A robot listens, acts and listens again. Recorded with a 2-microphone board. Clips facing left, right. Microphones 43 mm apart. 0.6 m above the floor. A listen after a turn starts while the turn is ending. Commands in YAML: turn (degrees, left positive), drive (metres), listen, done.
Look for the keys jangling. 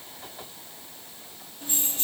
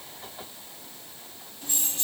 turn: 20
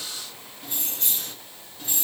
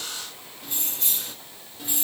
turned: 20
turn: -10
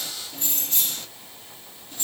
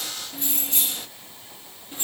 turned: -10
turn: -25
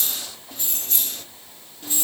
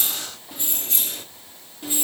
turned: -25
turn: -15
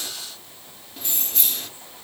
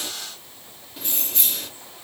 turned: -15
done: "Found it: keys jangling, straight ahead."